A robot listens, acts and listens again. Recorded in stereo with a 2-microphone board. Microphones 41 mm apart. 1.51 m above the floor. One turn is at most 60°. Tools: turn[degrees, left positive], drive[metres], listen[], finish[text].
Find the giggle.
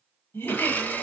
Thought: The giggle: about 65° left or 115° left.
Action: turn[60]
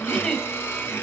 Thought: So it is at 30° left.
Action: turn[30]
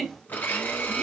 Action: finish[Facing the giggle.]